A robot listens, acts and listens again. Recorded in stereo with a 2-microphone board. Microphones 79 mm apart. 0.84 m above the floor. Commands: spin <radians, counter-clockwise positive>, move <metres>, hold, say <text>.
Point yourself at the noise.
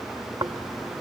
spin -1.05
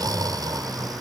spin -0.96
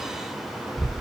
say Found it: snoring, straight ahead.